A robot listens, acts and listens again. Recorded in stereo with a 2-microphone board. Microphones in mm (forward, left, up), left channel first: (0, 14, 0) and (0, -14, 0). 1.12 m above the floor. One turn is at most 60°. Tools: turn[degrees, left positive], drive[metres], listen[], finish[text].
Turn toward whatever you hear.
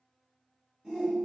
Thought: The shout: about 15° right or 165° right.
Action: turn[-15]
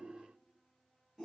Action: finish[Facing the shout.]